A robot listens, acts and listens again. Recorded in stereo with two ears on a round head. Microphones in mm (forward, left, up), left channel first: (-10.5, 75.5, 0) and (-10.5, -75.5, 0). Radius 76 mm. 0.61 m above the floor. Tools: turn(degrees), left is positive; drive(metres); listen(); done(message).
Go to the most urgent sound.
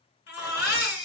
turn(degrees=70)
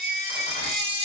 turn(degrees=45)
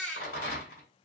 drive(metres=1.0)
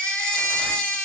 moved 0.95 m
drive(metres=1.0)
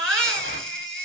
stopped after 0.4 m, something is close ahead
done("Arrived at the baby crying, straight ahead.")